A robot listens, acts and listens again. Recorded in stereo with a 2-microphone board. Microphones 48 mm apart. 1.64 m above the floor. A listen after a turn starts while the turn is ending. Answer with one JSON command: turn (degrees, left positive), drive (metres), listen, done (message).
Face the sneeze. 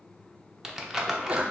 {"turn": -30}
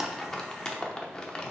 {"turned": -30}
{"listen": true}
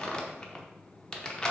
{"done": "I heard a sneeze, but can't make it out now. It was about straight ahead or 120° right."}